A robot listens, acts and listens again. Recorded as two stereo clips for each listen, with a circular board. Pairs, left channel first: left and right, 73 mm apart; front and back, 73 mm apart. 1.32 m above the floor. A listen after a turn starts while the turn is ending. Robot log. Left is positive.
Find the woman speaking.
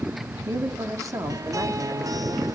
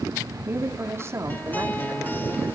note: The woman speaking: 130° right.
cmd yaw -130
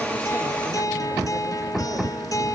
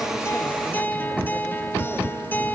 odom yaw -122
note: Nothing new. It was at 10° right.
cmd yaw -10
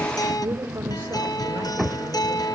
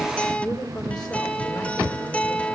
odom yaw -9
note: The woman speaking is now 30° right.
cmd yaw -30
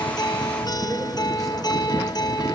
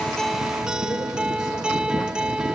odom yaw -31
cmd idle
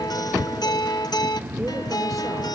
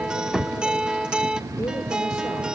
cmd idle
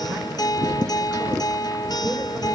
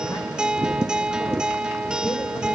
end: Facing where the woman speaking came from. I can't hear it now.